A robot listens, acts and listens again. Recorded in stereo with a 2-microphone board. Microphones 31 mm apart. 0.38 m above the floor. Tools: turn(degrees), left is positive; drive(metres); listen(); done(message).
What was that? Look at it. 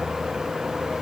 listen()
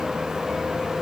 listen()
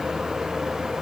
done("I can't make out anything.")